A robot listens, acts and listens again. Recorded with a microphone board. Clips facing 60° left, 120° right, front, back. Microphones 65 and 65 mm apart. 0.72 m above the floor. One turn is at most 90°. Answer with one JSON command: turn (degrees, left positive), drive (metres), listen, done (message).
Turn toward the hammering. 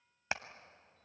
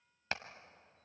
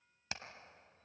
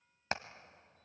{"turn": 90}
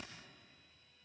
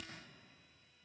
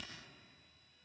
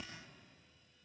{"turn": 45}
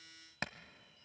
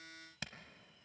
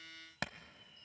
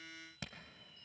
{"turn": 15}
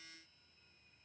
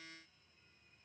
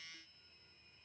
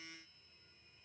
{"listen": true}
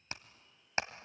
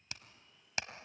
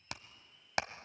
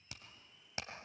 {"done": "Facing the hammering."}